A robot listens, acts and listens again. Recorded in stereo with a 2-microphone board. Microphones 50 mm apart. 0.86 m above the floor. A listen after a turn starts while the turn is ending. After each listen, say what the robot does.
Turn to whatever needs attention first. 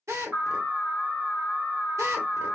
Turn 50° right.
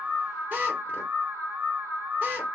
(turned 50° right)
Turn 75° right.
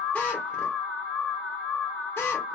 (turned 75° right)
Turn 10° left.
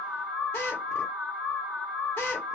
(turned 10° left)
Turn 10° left.
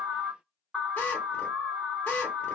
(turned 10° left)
Facing the alarm, 1 to 2 m away.